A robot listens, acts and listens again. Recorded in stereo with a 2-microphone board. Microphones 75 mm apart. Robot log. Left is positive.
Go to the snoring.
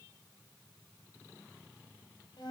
cmd idle
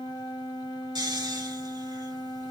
note: The snoring: about 70° right or 110° right.
cmd yaw -70
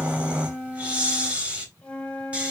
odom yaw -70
note: So it is at 15° right.
cmd yaw -15
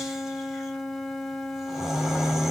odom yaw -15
cmd fwd 1.0
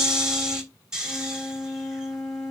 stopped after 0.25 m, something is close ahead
note: The snoring is now 10° right.
cmd yaw -10
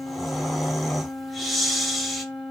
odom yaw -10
end: Blocked. The snoring is further on, straight ahead.